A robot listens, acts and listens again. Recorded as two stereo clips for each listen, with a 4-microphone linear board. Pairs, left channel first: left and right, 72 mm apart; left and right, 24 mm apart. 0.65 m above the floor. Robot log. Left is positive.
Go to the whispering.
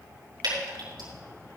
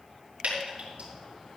cmd idle
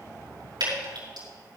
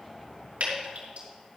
cmd idle
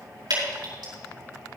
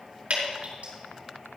end: I can't make out whispering to turn to.